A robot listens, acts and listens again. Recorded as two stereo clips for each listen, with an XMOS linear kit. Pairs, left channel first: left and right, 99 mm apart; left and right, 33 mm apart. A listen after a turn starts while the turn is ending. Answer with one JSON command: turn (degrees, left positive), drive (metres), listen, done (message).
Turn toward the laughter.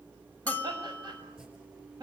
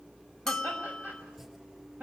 {"turn": -50}
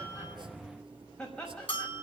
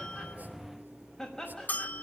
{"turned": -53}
{"done": "Facing the laughter."}